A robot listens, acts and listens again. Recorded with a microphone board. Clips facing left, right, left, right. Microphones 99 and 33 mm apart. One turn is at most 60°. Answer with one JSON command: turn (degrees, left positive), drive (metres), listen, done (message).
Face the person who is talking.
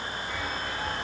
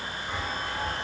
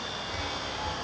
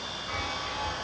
{"listen": true}
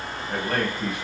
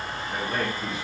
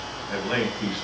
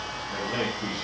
{"turn": 60}
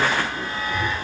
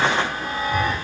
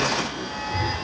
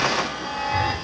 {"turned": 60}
{"turn": 30}
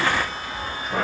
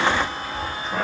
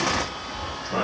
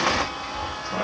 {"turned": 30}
{"turn": 10}
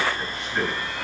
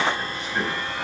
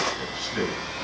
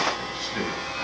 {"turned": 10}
{"listen": true}
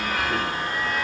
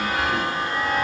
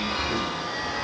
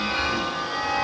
{"listen": true}
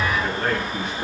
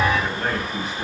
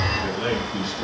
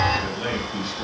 {"done": "Facing the man speaking, over 4 m away."}